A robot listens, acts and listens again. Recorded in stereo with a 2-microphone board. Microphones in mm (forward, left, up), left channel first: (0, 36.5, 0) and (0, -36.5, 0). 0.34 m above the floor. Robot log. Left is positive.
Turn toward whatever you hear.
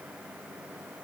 cmd idle
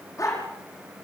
note: The dog barking: about 50° left or 130° left.
cmd yaw +50
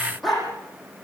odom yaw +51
end: Facing the dog barking.